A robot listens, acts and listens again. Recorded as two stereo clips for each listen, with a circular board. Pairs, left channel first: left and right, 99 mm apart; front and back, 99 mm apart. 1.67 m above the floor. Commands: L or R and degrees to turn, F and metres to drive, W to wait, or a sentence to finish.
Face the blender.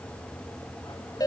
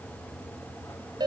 W
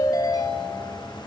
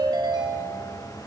W
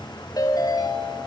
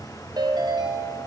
I can't make out a blender, only a ringtone.